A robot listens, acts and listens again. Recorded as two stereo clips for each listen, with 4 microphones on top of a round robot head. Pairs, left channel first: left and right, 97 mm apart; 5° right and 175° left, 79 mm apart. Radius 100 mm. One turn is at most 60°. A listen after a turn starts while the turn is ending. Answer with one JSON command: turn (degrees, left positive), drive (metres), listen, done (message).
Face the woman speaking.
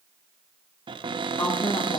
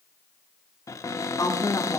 {"turn": 30}
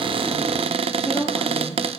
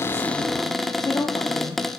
{"turn": 10}
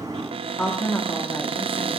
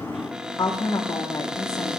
{"turn": 15}
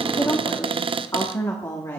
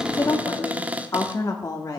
{"turn": 35}
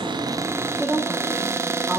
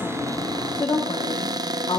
{"done": "Found it: a woman speaking, straight ahead, 1 to 2 m away."}